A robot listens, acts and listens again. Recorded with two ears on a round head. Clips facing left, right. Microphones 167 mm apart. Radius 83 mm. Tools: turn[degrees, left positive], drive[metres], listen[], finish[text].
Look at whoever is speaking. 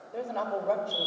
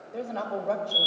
Action: turn[30]
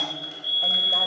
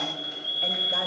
Action: listen[]
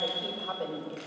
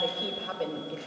Thought: So it is at 30° right.
Action: turn[-30]
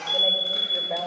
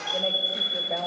Action: listen[]
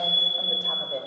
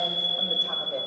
Action: listen[]
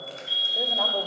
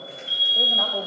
Action: finish[I heard a woman speaking from this way, but can't make it out now.]